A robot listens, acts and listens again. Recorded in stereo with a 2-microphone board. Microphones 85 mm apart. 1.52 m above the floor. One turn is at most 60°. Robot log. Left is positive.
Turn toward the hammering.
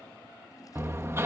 note: The hammering: about 30° right or 150° right.
cmd yaw -30
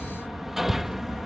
end: Found it: hammering, straight ahead.